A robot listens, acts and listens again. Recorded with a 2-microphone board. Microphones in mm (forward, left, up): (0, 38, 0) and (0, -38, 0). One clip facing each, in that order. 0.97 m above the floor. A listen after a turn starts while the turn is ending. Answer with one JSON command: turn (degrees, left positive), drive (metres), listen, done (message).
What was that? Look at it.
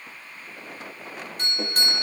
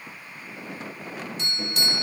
{"turn": 45}
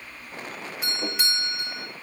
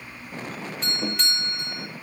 {"turn": 10}
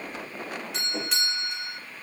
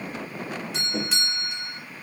{"done": "Facing the doorbell, 2 to 4 m away."}